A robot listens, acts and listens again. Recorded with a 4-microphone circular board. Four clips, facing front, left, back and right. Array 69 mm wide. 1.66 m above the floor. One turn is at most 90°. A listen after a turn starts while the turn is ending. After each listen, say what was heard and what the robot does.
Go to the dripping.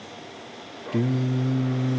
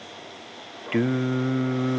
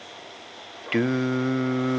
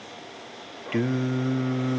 Keep listening.
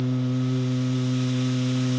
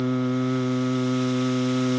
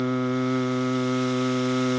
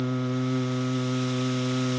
Keep listening.
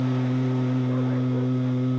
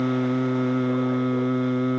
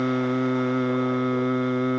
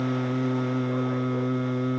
I can't make out dripping to turn to.